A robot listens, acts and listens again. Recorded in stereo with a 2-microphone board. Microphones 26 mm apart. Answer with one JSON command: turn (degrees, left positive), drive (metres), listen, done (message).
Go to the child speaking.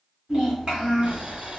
{"turn": -25}
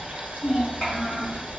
{"drive": 1.0}
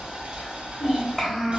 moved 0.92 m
{"drive": 1.0}
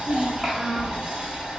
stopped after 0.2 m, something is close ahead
{"listen": true}
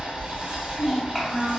{"done": "I am next to the child speaking."}